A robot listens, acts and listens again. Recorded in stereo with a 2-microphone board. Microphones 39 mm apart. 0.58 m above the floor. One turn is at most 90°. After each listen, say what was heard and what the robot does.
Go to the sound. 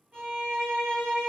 The violin: about 20° right or 160° right. Turn 20° right.
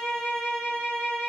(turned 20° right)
So it is at 140° right. Turn 90° right.
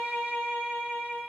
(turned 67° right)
The violin is now 70° right. Turn 70° right.
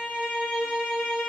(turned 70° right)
Drive 1.0 m forward.
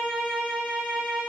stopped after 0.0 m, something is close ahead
Something is in my way. I am facing the violin but have not reached it.